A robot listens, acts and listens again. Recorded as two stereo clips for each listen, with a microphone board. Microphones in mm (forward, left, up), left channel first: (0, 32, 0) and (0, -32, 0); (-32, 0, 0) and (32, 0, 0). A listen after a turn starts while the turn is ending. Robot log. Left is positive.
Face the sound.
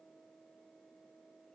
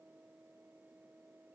cmd idle
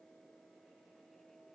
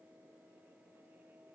cmd idle
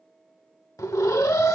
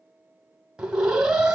note: The alarm: 75° left.
cmd yaw +75
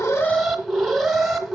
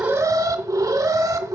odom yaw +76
end: Facing the alarm.